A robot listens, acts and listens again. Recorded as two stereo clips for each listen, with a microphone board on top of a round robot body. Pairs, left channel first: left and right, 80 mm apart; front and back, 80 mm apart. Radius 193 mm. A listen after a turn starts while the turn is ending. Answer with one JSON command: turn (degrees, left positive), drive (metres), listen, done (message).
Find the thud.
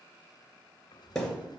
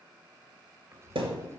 {"turn": 175}
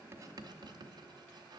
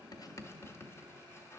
{"done": "I heard a thud from this way, but can't make it out now."}